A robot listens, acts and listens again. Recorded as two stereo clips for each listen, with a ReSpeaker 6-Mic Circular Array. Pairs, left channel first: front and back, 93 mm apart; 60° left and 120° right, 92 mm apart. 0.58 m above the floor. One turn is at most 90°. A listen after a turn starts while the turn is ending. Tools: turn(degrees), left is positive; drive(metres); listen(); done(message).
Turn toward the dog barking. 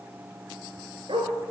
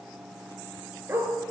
turn(degrees=90)
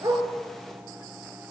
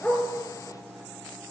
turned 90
turn(degrees=85)
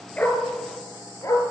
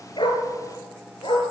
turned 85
turn(degrees=55)
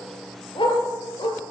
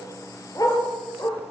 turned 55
turn(degrees=20)
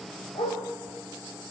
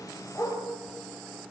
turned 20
done("Facing the dog barking, 2 to 4 m away.")